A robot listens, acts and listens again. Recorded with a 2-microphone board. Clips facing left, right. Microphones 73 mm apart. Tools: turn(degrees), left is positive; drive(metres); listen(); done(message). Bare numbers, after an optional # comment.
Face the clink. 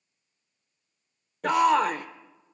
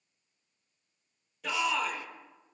listen()
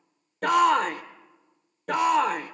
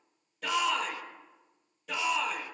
listen()
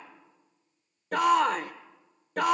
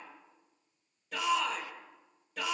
done("I can't make out a clink, only a shout.")